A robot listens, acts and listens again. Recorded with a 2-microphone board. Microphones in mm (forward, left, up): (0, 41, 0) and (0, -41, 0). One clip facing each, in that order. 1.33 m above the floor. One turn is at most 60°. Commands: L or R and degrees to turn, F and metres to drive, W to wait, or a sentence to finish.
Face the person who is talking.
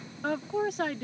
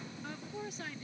L60
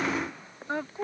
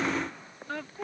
L25
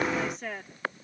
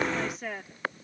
Facing the woman speaking.